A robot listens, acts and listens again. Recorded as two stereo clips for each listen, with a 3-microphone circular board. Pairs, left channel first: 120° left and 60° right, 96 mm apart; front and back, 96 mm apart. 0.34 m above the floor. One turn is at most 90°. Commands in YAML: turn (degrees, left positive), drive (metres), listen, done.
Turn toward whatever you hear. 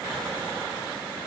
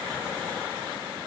listen: true
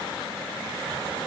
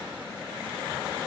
listen: true
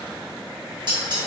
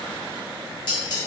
turn: -30
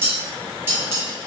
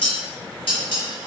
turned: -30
done: "Facing the dishes clattering, 1 to 2 m away."